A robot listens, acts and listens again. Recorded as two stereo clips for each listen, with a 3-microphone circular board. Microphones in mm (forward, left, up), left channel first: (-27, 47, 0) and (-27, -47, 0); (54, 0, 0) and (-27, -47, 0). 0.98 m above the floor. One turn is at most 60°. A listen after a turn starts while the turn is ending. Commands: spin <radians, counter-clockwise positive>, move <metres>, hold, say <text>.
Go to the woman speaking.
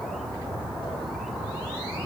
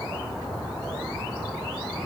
hold
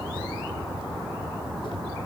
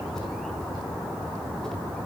hold
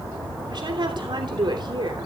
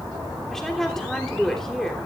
spin -0.96
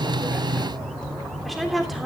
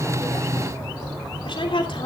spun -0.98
move 1.0
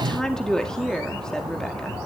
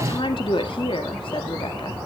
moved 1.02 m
spin 0.17
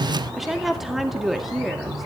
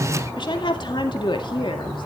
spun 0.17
move 1.0
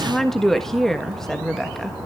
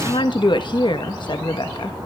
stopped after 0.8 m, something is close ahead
say Arrived at the woman speaking, straight ahead.